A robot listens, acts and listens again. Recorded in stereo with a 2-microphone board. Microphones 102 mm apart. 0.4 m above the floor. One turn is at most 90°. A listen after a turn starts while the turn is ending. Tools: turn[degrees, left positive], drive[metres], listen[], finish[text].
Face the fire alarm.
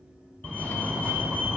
Action: turn[30]
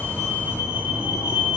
Thought: So it is at 15° right.
Action: turn[-15]
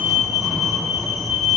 Action: finish[Found it: a fire alarm, straight ahead, over 4 m away.]